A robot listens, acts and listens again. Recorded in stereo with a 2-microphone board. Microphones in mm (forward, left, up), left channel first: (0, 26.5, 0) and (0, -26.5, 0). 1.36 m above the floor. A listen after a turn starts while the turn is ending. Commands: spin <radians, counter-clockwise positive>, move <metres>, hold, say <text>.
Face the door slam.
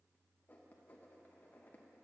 hold
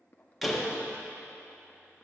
spin -0.52
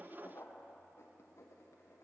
hold
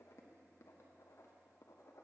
say I heard a door slam, but can't make it out now. It was about 25° left or 145° right.